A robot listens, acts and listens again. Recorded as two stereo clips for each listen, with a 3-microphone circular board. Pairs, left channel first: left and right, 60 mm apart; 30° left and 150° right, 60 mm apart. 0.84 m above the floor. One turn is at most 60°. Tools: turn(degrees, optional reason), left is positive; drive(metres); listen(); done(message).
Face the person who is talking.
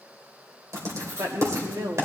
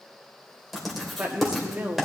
turn(degrees=-60, reason="The woman speaking: 90° right.")
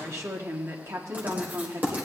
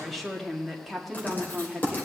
turn(degrees=-60, reason="The woman speaking is now 60° right.")
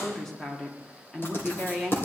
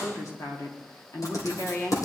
turn(degrees=10, reason="The woman speaking is now 10° left.")
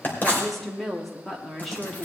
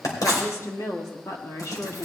done("Facing the woman speaking.")